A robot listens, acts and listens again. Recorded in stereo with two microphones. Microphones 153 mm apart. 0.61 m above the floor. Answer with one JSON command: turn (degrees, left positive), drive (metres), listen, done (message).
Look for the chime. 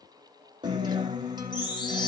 {"turn": 30}
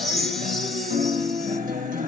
{"done": "Found it: a chime, straight ahead."}